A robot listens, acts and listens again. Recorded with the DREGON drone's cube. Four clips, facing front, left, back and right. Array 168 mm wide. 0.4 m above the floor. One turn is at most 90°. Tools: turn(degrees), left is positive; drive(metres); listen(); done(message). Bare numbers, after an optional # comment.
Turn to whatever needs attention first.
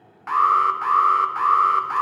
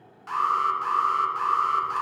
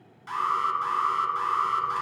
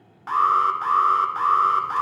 # The alarm: 35° right.
turn(-35)
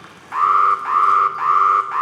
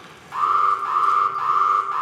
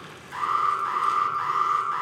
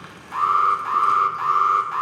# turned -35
done("Facing the alarm.")